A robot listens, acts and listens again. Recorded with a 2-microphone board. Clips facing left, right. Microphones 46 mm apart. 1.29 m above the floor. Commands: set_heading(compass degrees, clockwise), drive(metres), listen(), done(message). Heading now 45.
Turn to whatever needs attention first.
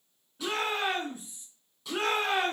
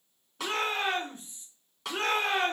set_heading(15)
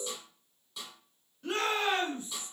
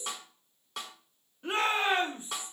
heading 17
set_heading(42)
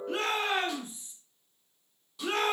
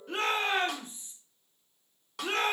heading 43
done("Facing the shout.")